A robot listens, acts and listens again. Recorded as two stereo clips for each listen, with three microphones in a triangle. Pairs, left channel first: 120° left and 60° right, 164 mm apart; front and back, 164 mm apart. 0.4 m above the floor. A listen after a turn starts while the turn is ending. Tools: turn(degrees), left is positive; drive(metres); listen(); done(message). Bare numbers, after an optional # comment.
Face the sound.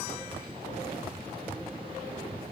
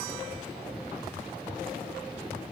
listen()
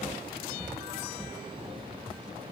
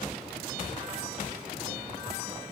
listen()
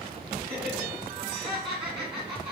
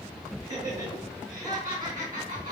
# The laughter: 120° right.
turn(-120)
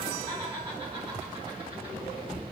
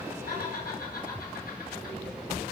# The laughter is now 15° left.
turn(15)
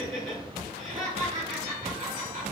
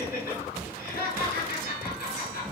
done("Facing the laughter, over 4 m away.")